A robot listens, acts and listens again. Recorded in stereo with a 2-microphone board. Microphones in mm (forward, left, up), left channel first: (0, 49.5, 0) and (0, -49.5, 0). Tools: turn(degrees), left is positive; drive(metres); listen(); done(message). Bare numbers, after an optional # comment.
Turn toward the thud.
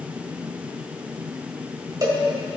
listen()
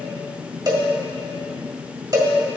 listen()
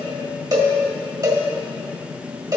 done("I can't make out a thud, only a cowbell.")